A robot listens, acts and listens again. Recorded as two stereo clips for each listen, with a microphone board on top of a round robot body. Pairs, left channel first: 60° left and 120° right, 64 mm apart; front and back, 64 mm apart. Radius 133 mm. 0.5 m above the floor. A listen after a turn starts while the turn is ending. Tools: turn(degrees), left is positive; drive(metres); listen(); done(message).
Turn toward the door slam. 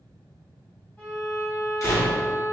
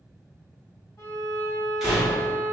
turn(degrees=95)
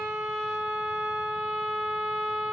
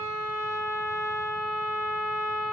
done("I heard a door slam from this way, but can't make it out now.")